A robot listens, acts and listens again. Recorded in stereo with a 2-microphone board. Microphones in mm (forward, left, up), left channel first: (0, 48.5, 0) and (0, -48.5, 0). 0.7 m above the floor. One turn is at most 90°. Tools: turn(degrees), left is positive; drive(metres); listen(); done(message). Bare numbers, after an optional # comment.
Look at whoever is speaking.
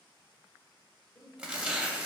# The woman speaking: about 35° left or 145° left.
turn(35)
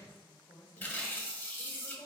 # So it is at 105° left.
turn(90)
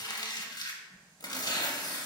# Nothing new. It was at 15° left.
turn(15)
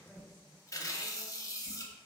listen()
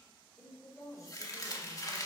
# The woman speaking is now 10° right.
turn(-10)
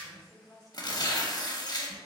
done("Found it: a woman speaking, straight ahead, 1 to 2 m away.")